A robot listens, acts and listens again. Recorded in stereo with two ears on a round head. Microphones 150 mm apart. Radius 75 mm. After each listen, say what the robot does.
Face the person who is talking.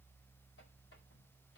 Keep listening.
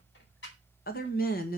Turn 55° left.
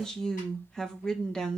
Facing the woman speaking, 1 to 2 m away.